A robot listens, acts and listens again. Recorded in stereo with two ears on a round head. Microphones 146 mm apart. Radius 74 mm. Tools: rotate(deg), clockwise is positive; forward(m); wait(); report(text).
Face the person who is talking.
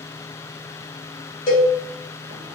wait()
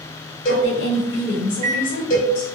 rotate(-75)
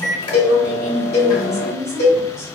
report("Facing the woman speaking, 1 to 2 m away.")